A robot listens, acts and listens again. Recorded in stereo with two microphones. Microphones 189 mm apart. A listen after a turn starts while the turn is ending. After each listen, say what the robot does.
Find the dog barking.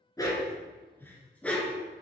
Turn 30° left.
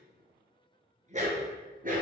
Turn 45° right.
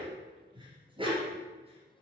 Turn 25° right.
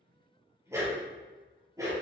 Turn 15° right.
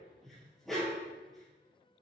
Found it: a dog barking, straight ahead, 2 to 4 m away.